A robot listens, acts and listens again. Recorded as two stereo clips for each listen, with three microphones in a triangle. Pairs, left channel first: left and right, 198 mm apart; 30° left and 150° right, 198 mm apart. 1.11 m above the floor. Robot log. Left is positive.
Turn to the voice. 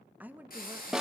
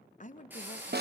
note: The woman speaking: 10° right.
cmd yaw -10
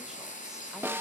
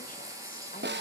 cmd idle
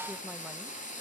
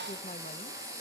cmd idle
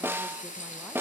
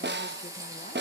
end: Facing where the woman speaking came from. I can't hear it now.